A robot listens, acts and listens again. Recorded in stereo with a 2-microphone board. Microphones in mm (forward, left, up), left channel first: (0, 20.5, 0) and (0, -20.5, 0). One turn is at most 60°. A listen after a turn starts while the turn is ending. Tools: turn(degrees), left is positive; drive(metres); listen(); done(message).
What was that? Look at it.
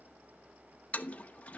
turn(degrees=35)
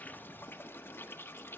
turn(degrees=60)
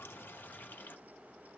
turn(degrees=50)
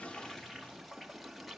done("Facing the toilet flushing.")